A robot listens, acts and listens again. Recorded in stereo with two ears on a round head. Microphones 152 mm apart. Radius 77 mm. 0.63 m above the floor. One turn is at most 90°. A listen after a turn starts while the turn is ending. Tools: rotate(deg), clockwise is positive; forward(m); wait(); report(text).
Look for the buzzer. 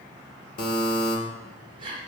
rotate(-55)
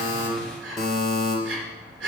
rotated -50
report("Found it: a buzzer, straight ahead, 2 to 4 m away.")